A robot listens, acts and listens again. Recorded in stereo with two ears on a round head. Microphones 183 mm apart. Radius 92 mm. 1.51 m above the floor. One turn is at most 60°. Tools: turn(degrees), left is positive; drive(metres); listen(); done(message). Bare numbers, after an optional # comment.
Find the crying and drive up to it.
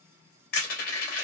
listen()
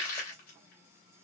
listen()
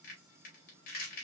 done("I can't make out crying to turn to.")